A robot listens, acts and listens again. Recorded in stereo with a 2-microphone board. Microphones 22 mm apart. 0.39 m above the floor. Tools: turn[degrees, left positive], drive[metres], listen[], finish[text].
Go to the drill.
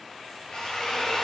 Thought: The drill: about 45° left or 135° left.
Action: turn[45]
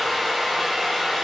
Thought: So it is at 10° left.
Action: turn[10]
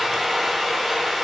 Action: drive[1.0]
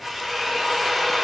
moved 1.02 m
Thought: The drill is now 10° left.
Action: turn[10]
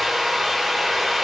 Action: drive[1.0]
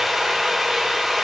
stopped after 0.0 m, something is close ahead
Action: finish[Arrived at the drill, straight ahead.]